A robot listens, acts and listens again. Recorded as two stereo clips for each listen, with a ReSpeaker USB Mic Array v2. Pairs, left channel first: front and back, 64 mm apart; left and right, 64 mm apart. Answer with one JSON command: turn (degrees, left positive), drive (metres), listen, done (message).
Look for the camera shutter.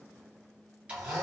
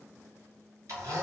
{"listen": true}
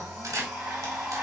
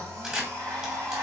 {"turn": -165}
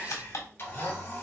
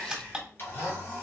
{"turn": -15}
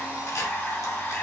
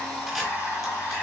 {"listen": true}
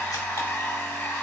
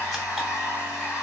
{"listen": true}
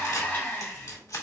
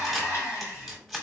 {"done": "Found it: a camera shutter, straight ahead."}